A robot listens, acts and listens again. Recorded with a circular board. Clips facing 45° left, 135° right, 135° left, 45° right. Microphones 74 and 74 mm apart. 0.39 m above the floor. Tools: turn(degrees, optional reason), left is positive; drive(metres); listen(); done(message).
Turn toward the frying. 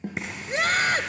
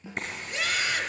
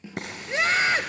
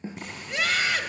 turn(degrees=130, reason="The frying: 130° left.")
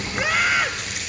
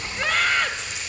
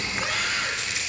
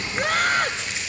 turn(degrees=15, reason="The frying is now 15° left.")
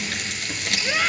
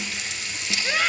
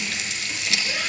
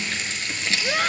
turn(degrees=10, reason="The frying is now 10° left.")
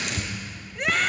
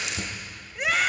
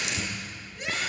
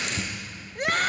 done("Facing the frying, over 4 m away.")